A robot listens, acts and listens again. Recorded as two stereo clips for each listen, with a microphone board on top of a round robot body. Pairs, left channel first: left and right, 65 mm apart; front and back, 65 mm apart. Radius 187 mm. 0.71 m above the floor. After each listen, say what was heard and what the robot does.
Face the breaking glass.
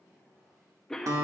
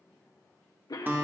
Keep listening.
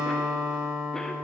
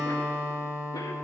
Keep listening.
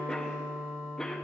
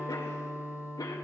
I can't make out breaking glass, only a guitar and a cough.